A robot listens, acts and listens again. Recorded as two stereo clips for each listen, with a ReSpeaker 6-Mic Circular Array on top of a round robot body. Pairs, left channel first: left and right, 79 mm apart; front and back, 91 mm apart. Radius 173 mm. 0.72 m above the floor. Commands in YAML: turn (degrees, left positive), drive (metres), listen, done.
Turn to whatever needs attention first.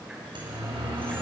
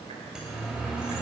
turn: -100
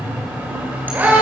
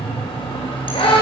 turn: -20
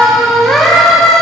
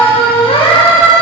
done: "Found it: a siren, straight ahead, over 4 m away."